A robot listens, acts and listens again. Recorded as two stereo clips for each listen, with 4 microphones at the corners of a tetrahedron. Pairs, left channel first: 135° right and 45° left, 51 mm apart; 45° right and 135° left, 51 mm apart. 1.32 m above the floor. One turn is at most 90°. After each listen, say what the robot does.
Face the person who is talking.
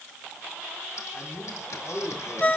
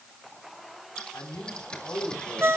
Turn 80° right.
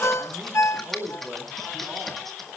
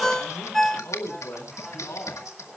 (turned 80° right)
Turn 25° right.
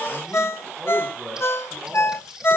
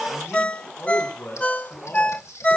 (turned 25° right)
Turn 15° right.
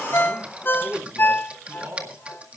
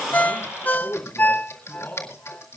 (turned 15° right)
Found it: a man speaking, straight ahead, over 4 m away.